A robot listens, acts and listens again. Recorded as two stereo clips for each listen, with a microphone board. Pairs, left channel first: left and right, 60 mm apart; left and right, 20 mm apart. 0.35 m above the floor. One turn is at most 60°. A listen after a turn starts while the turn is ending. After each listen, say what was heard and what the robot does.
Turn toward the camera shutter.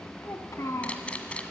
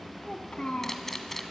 The camera shutter: about 20° left or 160° left. Turn 20° left.
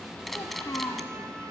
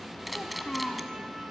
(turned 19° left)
Found it: a camera shutter, straight ahead.